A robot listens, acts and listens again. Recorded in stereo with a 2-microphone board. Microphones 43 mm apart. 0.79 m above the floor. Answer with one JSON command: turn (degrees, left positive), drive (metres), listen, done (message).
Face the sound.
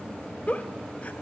{"turn": 30}
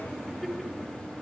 {"done": "Found it: a giggle, straight ahead, 2 to 4 m away."}